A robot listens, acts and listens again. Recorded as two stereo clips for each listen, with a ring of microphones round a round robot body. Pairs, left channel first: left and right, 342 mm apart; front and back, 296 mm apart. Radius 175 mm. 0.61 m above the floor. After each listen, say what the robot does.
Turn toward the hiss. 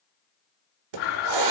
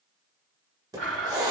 Turn 100° right.
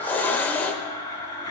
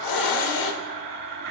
Facing the hiss, 1 to 2 m away.